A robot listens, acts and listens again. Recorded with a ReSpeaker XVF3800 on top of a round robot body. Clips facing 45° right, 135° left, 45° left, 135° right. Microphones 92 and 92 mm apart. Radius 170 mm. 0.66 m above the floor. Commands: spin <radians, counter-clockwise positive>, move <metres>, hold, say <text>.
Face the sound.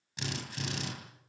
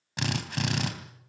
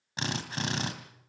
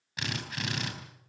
spin 1.83
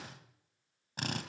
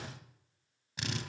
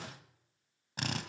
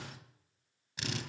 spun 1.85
say Facing the drill, 2 to 4 m away.